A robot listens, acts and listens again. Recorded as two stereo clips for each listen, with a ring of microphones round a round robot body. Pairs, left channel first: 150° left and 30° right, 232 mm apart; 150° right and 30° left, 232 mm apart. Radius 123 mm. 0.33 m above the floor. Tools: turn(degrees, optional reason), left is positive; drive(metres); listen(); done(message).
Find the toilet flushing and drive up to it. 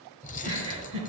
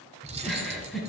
listen()
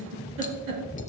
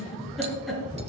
listen()
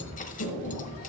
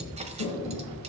turn(degrees=-165, reason="The toilet flushing: 165° right.")
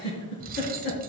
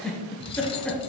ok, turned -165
listen()
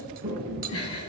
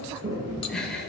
turn(degrees=20, reason="The toilet flushing is now 20° left.")
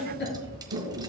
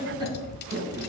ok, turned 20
drive(metres=1.0)
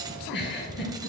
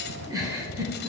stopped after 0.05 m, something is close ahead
listen()
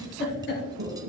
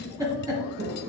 done("Blocked. The toilet flushing is further on, straight ahead.")